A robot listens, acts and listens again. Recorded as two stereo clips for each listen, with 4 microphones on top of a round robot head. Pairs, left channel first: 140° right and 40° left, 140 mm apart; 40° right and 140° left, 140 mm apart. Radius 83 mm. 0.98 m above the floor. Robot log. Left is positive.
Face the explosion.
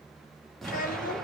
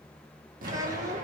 note: The explosion: 135° left.
cmd yaw +135
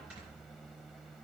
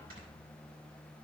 end: I heard an explosion from this way, but can't make it out now.